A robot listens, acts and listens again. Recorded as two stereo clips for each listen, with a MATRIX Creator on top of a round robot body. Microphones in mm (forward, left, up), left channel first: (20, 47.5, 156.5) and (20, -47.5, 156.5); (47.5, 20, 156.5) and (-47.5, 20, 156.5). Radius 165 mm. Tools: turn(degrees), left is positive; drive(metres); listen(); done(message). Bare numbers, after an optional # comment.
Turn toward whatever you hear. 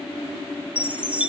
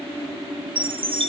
# The chime: 165° right.
turn(-165)
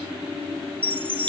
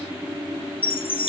# The chime is now 15° left.
turn(15)
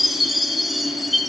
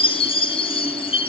done("Found it: a chime, straight ahead, under 1 m away.")